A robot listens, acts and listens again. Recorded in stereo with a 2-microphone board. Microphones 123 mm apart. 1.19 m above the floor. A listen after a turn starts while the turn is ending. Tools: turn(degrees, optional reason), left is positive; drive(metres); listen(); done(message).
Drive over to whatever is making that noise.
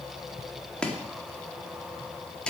turn(degrees=30)
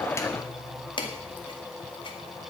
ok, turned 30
turn(degrees=140, reason="So it is at 140° left.")
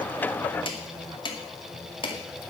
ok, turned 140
turn(degrees=40, reason="The chopping is now 40° left.")
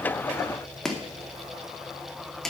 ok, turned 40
drive(metres=1.0)
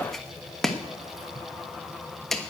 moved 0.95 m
drive(metres=1.0)
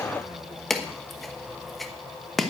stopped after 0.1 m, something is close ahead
done("Arrived at the chopping, straight ahead.")